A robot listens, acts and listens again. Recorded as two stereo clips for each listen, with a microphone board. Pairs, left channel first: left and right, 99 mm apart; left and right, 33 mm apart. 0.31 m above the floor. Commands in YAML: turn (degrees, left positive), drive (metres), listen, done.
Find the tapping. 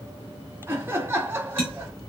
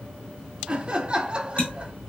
turn: 60
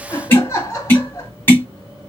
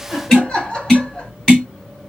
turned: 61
turn: 25
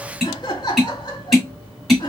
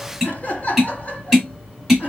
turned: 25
done: "Found it: tapping, straight ahead."